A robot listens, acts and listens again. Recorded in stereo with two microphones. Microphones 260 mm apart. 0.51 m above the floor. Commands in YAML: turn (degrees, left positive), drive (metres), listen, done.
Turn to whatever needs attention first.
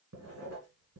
listen: true
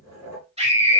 turn: -25
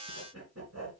listen: true
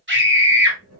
turn: -130
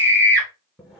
turn: -50
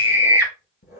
turn: -10
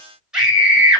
done: "Found it: a scream, straight ahead, 2 to 4 m away."